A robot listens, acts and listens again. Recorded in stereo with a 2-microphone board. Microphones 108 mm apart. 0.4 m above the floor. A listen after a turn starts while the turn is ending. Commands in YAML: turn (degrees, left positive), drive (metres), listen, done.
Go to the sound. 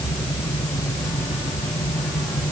listen: true
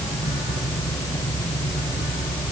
listen: true
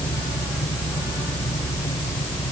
done: "I can't make out anything."